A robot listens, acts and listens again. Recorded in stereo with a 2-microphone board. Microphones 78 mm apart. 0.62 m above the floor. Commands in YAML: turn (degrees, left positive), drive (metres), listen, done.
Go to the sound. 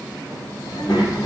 turn: 90
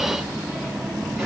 turn: -10
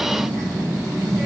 drive: 1.0
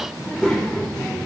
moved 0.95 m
turn: 10
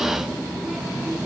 drive: 1.0
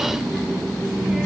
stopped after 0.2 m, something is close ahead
done: "I am next to the child speaking."